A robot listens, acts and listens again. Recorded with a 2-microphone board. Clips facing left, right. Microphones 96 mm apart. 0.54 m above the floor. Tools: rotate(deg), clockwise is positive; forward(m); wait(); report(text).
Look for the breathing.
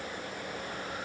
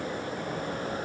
wait()
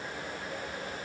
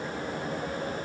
wait()
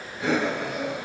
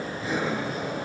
rotate(-90)
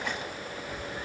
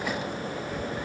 rotate(-10)
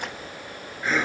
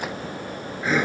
report("Facing the breathing, over 4 m away.")